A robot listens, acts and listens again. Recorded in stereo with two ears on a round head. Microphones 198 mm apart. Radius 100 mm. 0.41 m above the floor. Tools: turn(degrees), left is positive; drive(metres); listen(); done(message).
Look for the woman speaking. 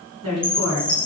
turn(degrees=-90)
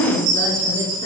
turn(degrees=20)
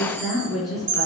done("Found it: a woman speaking, straight ahead.")